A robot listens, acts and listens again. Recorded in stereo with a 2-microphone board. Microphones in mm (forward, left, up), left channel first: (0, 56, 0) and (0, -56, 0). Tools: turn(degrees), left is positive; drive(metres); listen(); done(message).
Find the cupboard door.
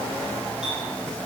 listen()
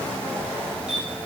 listen()
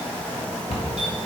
turn(degrees=65)
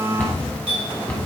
turn(degrees=15)
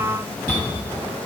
done("Facing the cupboard door, 1 to 2 m away.")